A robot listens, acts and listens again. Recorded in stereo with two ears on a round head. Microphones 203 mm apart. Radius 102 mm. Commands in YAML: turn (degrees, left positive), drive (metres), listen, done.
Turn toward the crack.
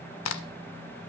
turn: 60
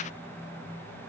listen: true
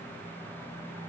done: "I heard a crack, but can't make it out now. It was about straight ahead or 60° left."